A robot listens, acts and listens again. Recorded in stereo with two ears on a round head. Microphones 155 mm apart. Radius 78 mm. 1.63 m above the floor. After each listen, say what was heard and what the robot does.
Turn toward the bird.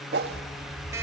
The bird: about 20° left or 160° left. Turn 20° left.
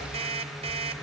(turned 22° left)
Keep listening.
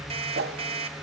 Keep listening.
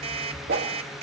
I heard a bird, but can't make it out now. It was about straight ahead or 140° left.